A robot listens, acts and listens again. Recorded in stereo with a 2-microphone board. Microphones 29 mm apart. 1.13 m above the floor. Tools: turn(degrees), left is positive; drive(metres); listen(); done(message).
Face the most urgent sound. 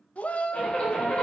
turn(degrees=55)
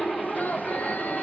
listen()
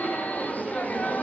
listen()
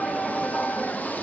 turn(degrees=70)
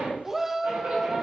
turn(degrees=-15)
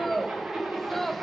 done("Found it: a shout, straight ahead.")